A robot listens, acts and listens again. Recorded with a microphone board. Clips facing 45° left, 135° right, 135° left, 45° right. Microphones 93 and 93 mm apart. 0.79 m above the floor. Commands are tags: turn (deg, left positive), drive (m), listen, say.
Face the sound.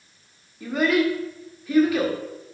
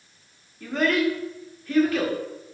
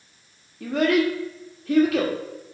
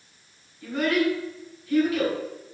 <turn deg="125"/>
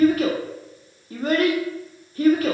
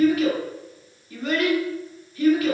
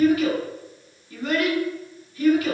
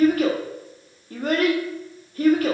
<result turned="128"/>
<say>Facing the child speaking.</say>